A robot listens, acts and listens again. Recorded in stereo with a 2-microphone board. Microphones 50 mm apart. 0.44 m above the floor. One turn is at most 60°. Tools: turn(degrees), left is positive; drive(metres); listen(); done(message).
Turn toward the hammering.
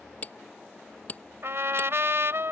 turn(degrees=30)
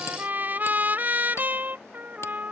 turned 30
listen()
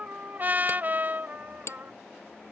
turn(degrees=60)
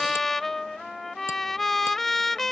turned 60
turn(degrees=60)
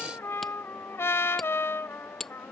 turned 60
done("Found it: hammering, straight ahead.")